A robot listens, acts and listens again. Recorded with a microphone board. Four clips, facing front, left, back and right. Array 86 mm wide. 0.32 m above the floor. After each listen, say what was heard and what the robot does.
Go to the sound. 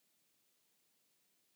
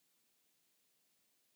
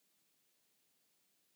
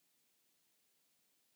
Keep listening.
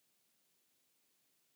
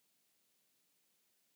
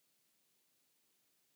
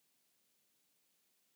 Keep listening.
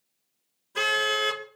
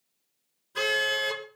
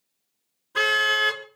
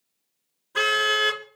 The car horn: 130° right. Turn 130° right.
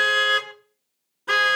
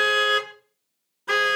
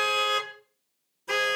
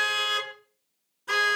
The car horn is now 25° left. Turn 25° left.
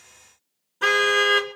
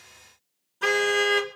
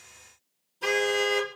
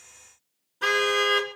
Drive 1.0 m forward.
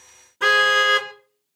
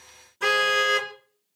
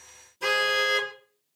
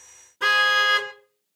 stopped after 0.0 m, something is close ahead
The car horn is now 20° right. Turn 20° right.
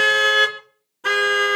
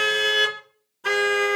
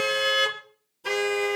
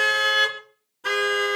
Blocked. The car horn is further on, straight ahead.